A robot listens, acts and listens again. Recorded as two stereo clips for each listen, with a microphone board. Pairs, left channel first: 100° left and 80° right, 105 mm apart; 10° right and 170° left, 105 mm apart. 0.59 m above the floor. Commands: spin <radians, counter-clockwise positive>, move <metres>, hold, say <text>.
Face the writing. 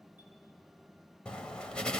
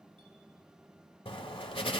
spin 0.35
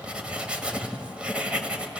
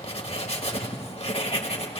say Facing the writing.